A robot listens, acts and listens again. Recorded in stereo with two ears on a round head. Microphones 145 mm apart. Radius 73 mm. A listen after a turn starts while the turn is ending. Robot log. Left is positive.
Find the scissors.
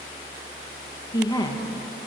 cmd idle
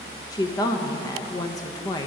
cmd idle
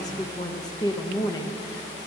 end: I can't make out scissors, only a woman speaking.